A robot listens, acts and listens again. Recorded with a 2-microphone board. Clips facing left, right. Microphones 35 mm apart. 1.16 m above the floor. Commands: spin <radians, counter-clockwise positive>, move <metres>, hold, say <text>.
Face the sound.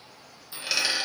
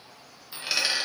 spin -0.52
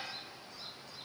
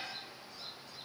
hold
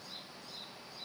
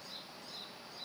say I heard a dropped coin, but can't make it out now. It was about 25° left or 145° right.